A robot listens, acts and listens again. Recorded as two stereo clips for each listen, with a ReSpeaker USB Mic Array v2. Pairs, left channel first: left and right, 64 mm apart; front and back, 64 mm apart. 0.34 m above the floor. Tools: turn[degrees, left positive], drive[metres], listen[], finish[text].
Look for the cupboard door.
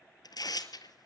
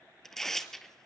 Action: listen[]
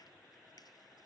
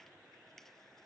Action: listen[]
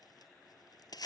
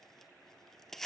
Action: finish[I can't make out a cupboard door, only tearing paper.]